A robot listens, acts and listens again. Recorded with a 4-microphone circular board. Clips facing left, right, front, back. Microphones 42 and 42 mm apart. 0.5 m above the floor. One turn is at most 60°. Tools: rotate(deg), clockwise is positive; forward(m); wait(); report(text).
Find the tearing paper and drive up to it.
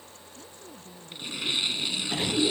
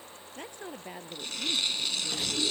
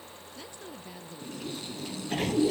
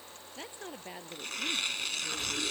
rotate(-60)
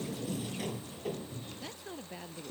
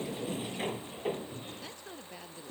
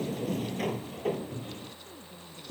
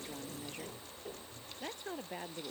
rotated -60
rotate(-60)
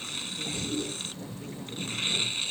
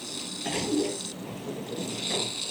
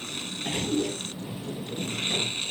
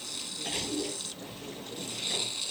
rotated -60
rotate(-45)
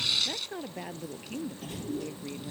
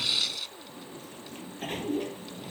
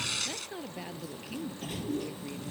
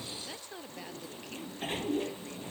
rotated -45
forward(1.0)
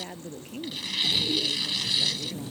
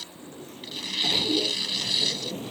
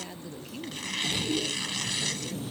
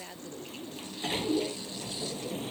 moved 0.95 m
wait()
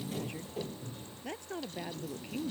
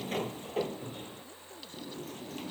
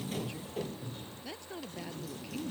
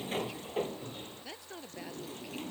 wait()
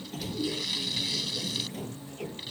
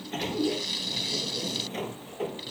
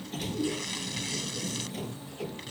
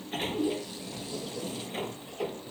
report("I heard tearing paper from this way, but can't make it out now. I did not reach it.")